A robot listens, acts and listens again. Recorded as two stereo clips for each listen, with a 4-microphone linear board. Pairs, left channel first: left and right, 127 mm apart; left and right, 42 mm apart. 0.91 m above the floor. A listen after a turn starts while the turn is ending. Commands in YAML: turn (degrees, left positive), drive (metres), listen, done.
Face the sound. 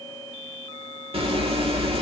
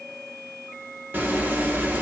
turn: -50
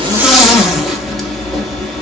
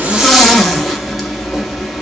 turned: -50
done: "Facing the zipper."